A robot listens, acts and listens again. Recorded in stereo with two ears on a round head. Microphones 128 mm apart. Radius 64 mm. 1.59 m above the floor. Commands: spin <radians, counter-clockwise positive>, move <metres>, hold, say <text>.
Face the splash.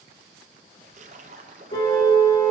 spin -0.87
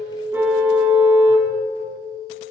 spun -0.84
hold
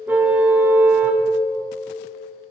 say I heard a splash, but can't make it out now. It was about 5° right or 80° right.